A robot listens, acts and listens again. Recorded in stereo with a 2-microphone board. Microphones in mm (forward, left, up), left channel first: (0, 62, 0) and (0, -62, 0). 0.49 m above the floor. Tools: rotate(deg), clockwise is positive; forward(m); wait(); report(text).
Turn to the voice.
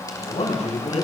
rotate(-65)
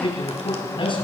rotate(-45)
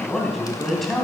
report("Found it: a man speaking, straight ahead, 2 to 4 m away.")